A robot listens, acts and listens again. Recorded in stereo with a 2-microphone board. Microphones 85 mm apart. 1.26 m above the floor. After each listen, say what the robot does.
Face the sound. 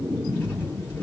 Turn 25° left.
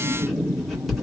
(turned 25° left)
Facing the writing.